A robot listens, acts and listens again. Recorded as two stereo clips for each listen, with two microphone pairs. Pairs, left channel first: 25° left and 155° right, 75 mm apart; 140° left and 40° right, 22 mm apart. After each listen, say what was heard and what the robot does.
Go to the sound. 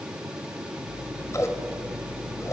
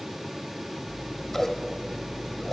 The scissors: 65° left. Turn 65° left.
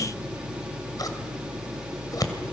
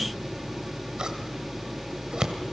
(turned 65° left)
Drive 1.0 m forward.
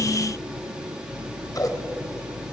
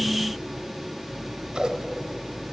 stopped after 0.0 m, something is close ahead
Blocked. The scissors is further on, straight ahead.